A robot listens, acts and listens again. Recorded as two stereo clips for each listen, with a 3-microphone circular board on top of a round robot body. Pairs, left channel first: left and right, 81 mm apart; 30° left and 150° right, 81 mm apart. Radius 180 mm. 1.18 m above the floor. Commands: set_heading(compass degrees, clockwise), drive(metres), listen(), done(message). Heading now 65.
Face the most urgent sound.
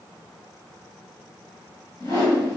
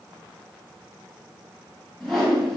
listen()
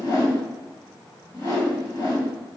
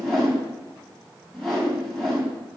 listen()
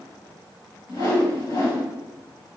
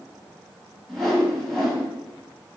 done("I can't make out anything urgent to turn to.")